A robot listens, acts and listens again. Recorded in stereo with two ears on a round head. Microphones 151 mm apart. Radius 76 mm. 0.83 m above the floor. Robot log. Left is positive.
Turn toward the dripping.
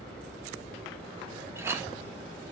cmd idle
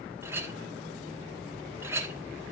cmd idle
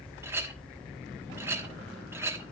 end: I can't make out dripping, only a clink.